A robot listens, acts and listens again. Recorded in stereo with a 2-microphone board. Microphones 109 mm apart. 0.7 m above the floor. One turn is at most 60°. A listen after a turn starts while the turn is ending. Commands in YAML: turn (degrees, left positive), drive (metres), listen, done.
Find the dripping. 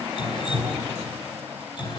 turn: 45
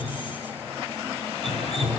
turn: 60
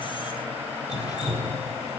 turn: 40
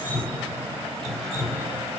done: "Found it: dripping, straight ahead, over 4 m away."